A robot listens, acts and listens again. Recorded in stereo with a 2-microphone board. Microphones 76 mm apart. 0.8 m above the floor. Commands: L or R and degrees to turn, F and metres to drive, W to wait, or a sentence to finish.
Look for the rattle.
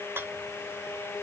R30
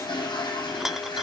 Found it: a rattle, straight ahead.